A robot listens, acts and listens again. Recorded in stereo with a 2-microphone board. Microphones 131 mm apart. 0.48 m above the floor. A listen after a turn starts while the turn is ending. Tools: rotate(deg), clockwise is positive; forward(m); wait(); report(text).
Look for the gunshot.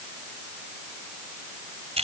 wait()
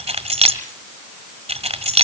wait()
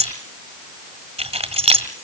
report("I can't make out a gunshot, only keys jangling.")